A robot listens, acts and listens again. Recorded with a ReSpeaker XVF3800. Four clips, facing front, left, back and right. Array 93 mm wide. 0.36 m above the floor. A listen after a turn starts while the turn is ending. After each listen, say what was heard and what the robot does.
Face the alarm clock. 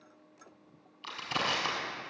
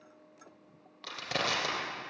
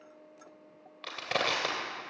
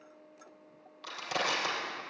Keep listening.
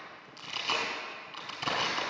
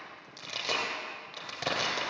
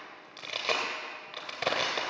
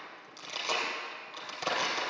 Keep listening.
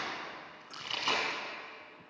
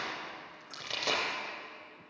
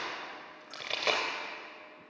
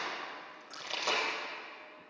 I can't make out an alarm clock, only crushing.